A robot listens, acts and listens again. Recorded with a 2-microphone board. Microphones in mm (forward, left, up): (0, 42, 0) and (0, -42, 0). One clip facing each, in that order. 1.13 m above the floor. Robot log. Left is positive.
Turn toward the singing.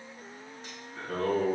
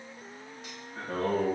note: The singing: about 30° right or 150° right.
cmd yaw -30
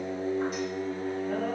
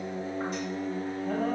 note: So it is at 110° right.
cmd yaw -110
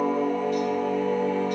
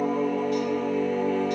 note: The singing is now 15° left.
cmd yaw +15
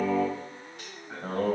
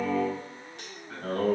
note: The singing is now 10° left.
cmd yaw +10
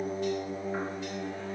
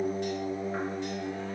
end: Found it: singing, straight ahead.